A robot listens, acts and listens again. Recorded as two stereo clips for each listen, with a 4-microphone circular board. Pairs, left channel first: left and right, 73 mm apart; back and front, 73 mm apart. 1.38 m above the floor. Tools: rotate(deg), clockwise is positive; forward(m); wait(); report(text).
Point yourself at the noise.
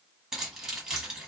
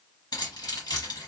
rotate(175)
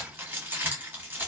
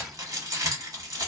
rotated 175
rotate(25)
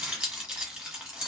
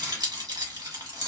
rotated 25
rotate(10)
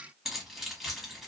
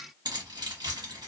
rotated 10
report("Facing the keys jangling, 1 to 2 m away.")